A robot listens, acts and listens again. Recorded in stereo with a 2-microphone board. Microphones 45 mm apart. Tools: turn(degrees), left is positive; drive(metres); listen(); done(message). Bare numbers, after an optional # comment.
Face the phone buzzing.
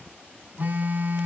# The phone buzzing: about 40° right or 140° right.
turn(-40)
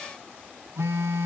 # So it is at 100° right.
turn(-100)
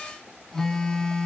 # The phone buzzing is now 10° left.
turn(10)
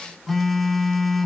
done("Facing the phone buzzing, 1 to 2 m away.")